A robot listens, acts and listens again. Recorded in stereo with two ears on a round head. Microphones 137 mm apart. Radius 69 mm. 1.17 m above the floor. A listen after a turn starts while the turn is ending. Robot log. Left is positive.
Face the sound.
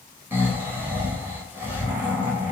note: The snoring: about 15° right or 165° right.
cmd yaw -15
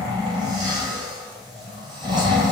note: So it is at 150° right.
cmd yaw -150
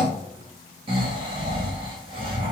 note: The snoring is now 30° right.
cmd yaw -30
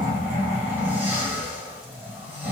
note: The snoring is now 10° right.
cmd yaw -10
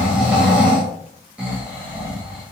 end: Facing the snoring, 1 to 2 m away.